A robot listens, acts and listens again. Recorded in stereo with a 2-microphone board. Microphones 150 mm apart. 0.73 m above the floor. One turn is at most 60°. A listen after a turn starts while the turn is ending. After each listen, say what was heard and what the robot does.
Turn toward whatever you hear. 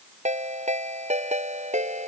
The ringtone: about 50° right or 130° right. Turn 50° right.
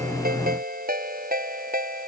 So it is at 80° right. Turn 60° right.
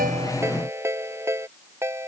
The ringtone is now 20° right. Turn 20° right.
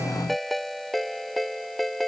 Found it: a ringtone, straight ahead.